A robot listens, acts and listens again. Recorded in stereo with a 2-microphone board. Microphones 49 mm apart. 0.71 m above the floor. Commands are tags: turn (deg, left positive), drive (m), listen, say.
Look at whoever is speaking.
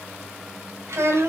<turn deg="-65"/>
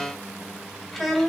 <say>Found it: a child speaking, straight ahead, 2 to 4 m away.</say>